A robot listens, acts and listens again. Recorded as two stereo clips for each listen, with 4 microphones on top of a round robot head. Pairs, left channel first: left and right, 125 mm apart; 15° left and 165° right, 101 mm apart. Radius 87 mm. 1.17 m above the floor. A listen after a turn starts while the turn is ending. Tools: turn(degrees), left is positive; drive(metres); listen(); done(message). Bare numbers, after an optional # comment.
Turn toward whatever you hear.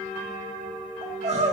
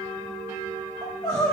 # The crying: 55° right.
turn(-55)
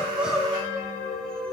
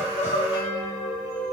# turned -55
done("Found it: crying, straight ahead.")